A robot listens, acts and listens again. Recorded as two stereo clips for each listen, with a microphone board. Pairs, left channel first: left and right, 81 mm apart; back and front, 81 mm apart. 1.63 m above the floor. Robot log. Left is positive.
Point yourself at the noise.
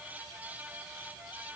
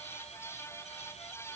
cmd idle
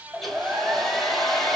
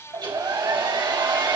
end: Facing the hair dryer.